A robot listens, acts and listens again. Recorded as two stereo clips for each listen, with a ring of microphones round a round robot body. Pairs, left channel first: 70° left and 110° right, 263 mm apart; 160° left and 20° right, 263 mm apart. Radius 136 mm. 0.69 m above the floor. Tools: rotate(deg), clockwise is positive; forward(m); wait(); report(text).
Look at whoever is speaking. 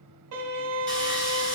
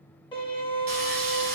wait()
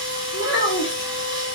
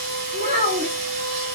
rotate(-40)
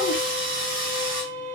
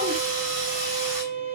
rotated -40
wait()
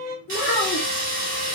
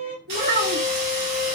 rotate(-25)
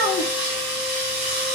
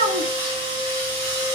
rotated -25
rotate(-20)
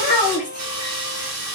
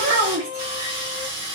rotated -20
report("Facing the child speaking, 1 to 2 m away.")